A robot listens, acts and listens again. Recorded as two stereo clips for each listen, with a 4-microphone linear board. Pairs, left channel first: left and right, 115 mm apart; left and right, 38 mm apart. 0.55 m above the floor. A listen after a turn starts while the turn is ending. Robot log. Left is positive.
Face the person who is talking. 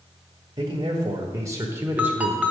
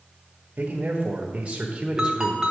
note: The man speaking: about 20° right or 160° right.
cmd yaw -20
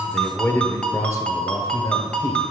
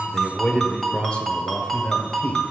note: So it is at 40° left.
cmd yaw +40
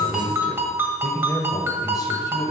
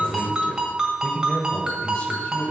note: The man speaking is now 35° left.
cmd yaw +35
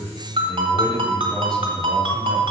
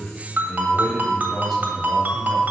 note: The man speaking is now 10° left.
cmd yaw +10
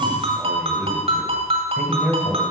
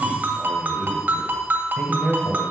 end: Facing the man speaking.